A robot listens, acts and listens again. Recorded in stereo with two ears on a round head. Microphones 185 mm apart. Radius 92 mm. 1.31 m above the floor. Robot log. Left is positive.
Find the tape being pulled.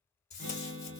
note: The tape being pulled: about 35° left or 145° left.
cmd yaw +35
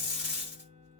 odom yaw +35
end: Found it: tape being pulled, straight ahead.